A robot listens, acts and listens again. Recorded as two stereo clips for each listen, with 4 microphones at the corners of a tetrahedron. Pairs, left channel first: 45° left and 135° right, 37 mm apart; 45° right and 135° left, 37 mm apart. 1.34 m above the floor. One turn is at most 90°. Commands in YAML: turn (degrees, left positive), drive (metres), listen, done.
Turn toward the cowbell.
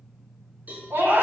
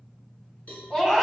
turn: -90
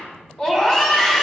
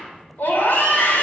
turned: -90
listen: true
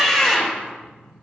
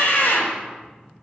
listen: true
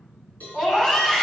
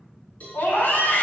done: "Found it: a cowbell, straight ahead."